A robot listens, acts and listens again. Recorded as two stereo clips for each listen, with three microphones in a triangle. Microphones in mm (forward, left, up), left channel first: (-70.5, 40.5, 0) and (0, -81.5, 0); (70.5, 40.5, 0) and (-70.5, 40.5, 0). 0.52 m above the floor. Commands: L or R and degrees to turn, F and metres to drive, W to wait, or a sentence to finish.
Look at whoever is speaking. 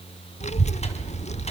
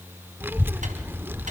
L105
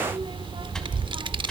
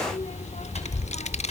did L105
R15
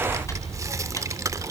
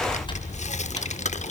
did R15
Facing the child speaking.